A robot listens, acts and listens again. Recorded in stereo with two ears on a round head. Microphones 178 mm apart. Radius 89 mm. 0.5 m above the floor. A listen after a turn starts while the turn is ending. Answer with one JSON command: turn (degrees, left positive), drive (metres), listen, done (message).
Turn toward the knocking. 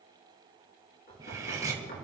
{"turn": 45}
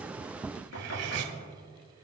{"turn": 90}
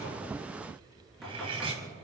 {"done": "Facing the knocking, over 4 m away."}